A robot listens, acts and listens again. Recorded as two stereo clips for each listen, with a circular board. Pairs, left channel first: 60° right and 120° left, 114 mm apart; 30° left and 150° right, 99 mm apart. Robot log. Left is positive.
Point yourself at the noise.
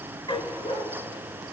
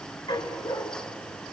note: The dog barking: 20° right.
cmd yaw -20
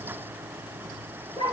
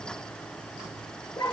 note: The dog barking is now 20° right.
cmd yaw -20
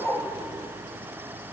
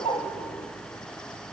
end: Found it: a dog barking, straight ahead, 2 to 4 m away.